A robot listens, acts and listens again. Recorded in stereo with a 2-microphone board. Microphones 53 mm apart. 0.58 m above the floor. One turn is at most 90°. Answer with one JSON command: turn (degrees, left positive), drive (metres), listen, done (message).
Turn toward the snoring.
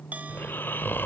{"turn": 40}
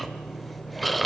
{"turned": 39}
{"done": "Found it: snoring, straight ahead."}